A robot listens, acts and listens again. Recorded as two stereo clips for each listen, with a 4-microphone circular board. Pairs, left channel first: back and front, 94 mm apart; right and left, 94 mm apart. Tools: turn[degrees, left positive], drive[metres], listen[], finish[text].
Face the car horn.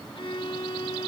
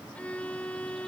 Action: listen[]
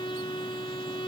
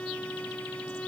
Action: listen[]
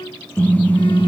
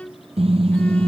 Thought: The car horn: 105° left.
Action: turn[105]
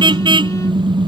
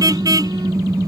Thought: The car horn is now 35° left.
Action: turn[35]
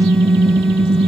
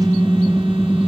Thought: The car horn is now 10° left.
Action: turn[10]
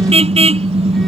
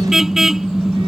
Action: finish[Facing the car horn.]